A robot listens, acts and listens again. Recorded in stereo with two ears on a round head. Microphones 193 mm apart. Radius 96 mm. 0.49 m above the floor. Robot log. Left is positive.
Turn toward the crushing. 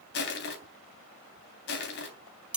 note: The crushing: about 55° left or 125° left.
cmd yaw +55
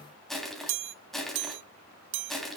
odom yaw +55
end: Facing the crushing.